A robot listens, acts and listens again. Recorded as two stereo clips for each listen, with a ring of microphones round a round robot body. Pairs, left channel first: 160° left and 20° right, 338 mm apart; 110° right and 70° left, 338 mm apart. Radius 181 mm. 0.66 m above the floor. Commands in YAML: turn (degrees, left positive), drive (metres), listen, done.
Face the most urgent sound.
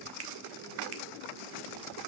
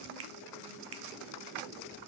listen: true
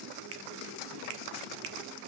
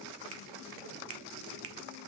listen: true
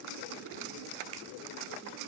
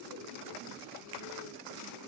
done: "I can't make out anything urgent to turn to."